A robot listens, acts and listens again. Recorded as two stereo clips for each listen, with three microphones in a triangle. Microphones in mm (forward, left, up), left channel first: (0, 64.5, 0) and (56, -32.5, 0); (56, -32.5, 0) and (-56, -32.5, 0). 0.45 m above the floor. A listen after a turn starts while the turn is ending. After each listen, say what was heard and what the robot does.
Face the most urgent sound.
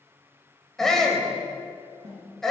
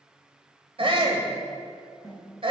The shout: 155° right. Turn 155° right.
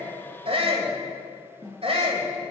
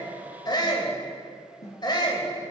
The shout is now 45° right. Turn 45° right.
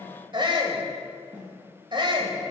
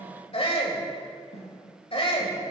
The shout is now 20° right. Turn 20° right.
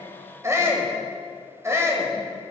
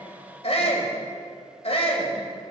Found it: a shout, straight ahead.